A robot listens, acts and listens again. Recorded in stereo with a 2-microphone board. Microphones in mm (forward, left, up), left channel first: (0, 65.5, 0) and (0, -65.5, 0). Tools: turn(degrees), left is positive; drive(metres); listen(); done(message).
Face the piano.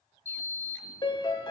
turn(degrees=40)
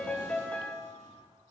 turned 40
turn(degrees=10)
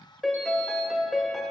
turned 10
done("Facing the piano.")